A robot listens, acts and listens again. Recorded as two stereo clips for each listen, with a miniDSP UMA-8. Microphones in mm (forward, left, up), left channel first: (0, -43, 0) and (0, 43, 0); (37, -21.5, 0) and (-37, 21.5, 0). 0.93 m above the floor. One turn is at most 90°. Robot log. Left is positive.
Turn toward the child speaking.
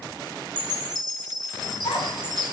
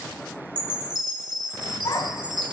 note: The child speaking: 70° right.
cmd yaw -70
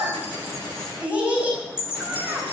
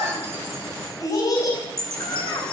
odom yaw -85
note: The child speaking is now 15° left.
cmd yaw +15
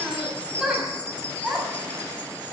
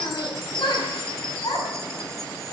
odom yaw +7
note: The child speaking is now 10° left.
cmd yaw +10
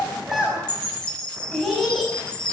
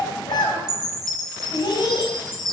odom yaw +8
end: Facing the child speaking, over 4 m away.